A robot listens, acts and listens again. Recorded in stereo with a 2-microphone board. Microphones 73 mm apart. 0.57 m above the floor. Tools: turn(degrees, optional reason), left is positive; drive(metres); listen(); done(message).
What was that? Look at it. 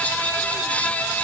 listen()
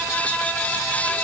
listen()
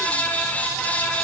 done("I can't make out anything.")